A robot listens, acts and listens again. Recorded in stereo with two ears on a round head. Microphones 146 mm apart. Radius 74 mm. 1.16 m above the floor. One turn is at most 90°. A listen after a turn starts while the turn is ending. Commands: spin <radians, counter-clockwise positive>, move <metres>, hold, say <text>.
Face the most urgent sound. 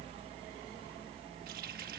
hold
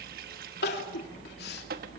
spin 1.31
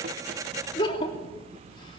spin 0.52
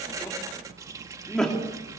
say Found it: crying, straight ahead.